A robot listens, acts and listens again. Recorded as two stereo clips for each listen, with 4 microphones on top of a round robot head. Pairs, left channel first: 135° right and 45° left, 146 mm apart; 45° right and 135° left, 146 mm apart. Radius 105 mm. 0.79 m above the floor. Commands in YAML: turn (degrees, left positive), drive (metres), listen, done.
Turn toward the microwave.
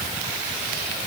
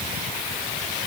listen: true
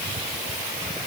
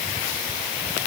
listen: true
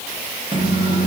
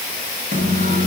turn: 105
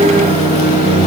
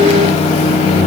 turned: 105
done: "Facing the microwave, 1 to 2 m away."